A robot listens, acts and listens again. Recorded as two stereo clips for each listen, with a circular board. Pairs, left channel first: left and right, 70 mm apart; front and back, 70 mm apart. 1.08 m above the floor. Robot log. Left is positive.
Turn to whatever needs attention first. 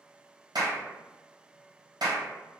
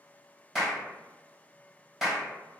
cmd idle
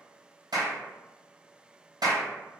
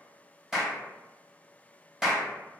cmd idle
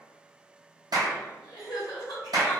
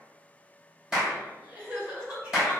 note: The crying: 105° left.
cmd yaw +105
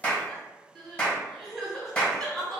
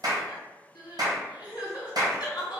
end: Found it: crying, straight ahead, 1 to 2 m away.